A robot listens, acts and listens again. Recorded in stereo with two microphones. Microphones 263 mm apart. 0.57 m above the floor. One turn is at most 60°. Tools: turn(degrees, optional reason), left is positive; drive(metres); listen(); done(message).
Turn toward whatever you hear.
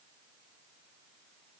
listen()
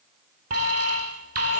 turn(degrees=-60, reason="The alarm: about 65° right or 115° right.")
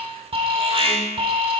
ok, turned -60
turn(degrees=-20, reason="So it is at 20° right.")
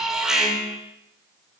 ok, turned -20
done("Found it: an alarm, straight ahead.")